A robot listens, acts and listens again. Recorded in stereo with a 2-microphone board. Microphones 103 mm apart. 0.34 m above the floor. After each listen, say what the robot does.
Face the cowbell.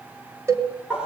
Turn 25° right.
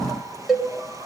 Found it: a cowbell, straight ahead, 2 to 4 m away.